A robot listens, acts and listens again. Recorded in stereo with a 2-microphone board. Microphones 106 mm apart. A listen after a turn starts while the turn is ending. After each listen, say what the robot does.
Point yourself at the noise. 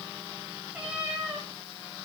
Turn 30° right.
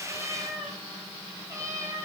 Turn 155° right.
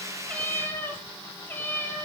Turn 20° left.
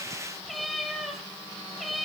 Found it: a cat meowing, straight ahead, 2 to 4 m away.